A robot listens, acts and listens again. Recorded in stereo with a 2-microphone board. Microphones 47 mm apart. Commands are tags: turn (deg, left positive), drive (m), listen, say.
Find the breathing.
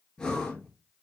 <turn deg="20"/>
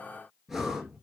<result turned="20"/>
<say>Facing the breathing.</say>